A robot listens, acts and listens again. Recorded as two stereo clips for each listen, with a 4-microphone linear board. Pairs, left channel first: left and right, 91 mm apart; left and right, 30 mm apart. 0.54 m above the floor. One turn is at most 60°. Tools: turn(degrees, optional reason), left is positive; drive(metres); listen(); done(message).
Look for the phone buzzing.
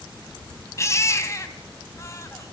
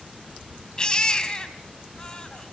listen()
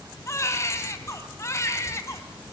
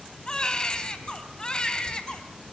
listen()
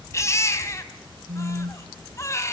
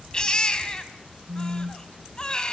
turn(degrees=-60)
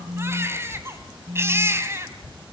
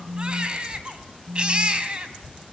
turn(degrees=-20, reason="So it is at 20° right.")
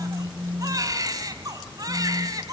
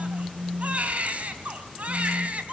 done("Found it: a phone buzzing, straight ahead.")